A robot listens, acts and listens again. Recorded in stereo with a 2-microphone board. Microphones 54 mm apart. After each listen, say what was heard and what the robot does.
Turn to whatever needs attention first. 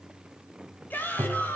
The shout: about 35° left or 145° left. Turn 35° left.
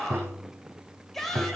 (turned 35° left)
Found it: a shout, straight ahead.